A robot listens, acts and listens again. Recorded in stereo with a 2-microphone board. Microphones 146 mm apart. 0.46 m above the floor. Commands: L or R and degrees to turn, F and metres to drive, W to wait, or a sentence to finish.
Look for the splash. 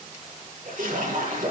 R65
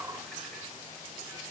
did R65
W
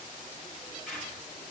I heard a splash, but can't make it out now. It was about straight ahead or 50° right.